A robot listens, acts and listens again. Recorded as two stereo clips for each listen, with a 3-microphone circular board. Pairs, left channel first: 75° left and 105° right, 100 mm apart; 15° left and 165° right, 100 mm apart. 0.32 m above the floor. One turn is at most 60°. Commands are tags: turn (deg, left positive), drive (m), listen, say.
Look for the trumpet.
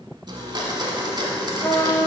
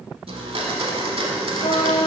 <turn deg="15"/>
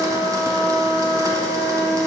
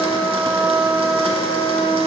<say>Facing the trumpet, 1 to 2 m away.</say>